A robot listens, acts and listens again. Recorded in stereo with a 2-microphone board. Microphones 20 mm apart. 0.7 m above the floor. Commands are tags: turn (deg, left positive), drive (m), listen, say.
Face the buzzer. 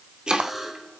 <turn deg="-30"/>
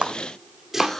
<turn deg="20"/>
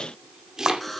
<say>Found it: a buzzer, straight ahead, 2 to 4 m away.</say>